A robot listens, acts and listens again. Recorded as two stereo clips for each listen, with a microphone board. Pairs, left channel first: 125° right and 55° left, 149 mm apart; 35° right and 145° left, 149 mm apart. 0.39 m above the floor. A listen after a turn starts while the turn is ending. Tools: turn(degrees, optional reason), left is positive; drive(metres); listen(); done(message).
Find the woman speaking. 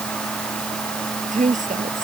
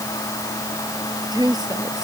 turn(degrees=85, reason="The woman speaking: 85° left.")
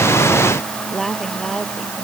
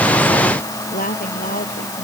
turn(degrees=-35, reason="The woman speaking is now 35° right.")
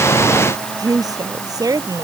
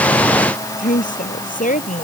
turn(degrees=-10, reason="The woman speaking is now 10° right.")
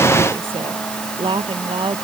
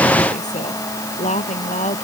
done("Found it: a woman speaking, straight ahead.")